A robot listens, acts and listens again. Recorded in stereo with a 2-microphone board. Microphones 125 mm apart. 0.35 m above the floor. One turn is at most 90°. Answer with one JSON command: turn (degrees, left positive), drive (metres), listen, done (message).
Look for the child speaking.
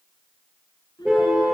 {"turn": 35}
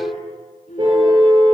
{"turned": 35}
{"turn": 90}
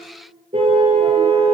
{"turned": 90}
{"turn": 15}
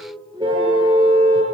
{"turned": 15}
{"turn": -35}
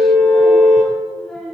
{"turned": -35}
{"done": "Facing the child speaking."}